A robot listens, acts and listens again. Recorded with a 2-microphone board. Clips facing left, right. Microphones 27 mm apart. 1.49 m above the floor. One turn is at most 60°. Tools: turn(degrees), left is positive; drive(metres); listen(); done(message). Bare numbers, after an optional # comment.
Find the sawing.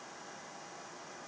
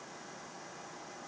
listen()
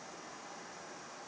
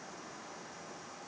listen()
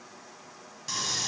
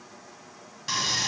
# The sawing: about 25° right or 155° right.
turn(-25)
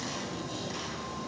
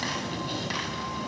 # So it is at 130° right.
turn(-60)
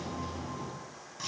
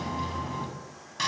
# The sawing is now 85° right.
turn(-60)
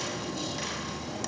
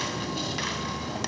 # The sawing is now 35° right.
turn(-35)
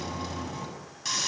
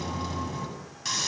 done("Found it: sawing, straight ahead, over 4 m away.")